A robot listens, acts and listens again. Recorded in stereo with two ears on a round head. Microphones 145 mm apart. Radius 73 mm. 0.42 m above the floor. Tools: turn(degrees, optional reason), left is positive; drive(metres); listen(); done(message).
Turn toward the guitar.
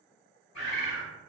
listen()
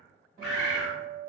turn(degrees=-55, reason="The guitar: about 55° right or 125° right.")
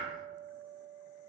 turn(degrees=-55, reason="So it is at 55° right.")
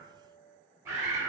done("Found it: a guitar, straight ahead, 1 to 2 m away.")